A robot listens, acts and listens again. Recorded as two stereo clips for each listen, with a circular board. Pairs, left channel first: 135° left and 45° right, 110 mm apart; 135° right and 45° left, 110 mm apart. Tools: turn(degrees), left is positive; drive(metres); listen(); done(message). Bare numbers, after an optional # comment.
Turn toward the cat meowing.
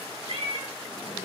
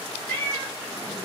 # The cat meowing: 65° right.
turn(-65)
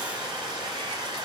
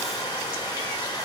listen()
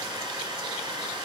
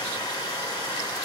listen()
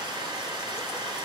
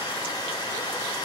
done("I heard a cat meowing from this way, but can't make it out now.")